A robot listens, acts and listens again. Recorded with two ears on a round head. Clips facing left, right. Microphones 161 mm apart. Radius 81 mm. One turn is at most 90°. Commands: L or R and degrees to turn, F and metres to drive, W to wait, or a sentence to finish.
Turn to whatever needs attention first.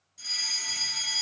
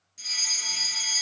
R40
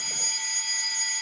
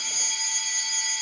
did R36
R90
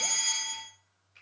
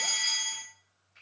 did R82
R20
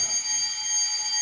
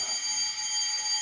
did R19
Facing the fire alarm.